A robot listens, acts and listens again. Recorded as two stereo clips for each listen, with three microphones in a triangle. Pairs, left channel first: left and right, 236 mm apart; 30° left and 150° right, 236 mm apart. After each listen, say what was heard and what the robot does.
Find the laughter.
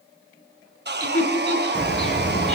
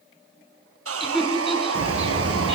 The laughter: 120° left. Turn 120° left.
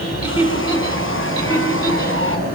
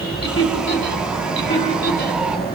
The laughter is now 20° left. Turn 20° left.
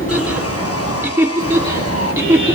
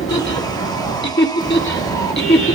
The laughter is now 10° right. Turn 10° right.
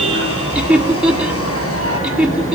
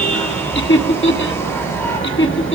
Facing the laughter.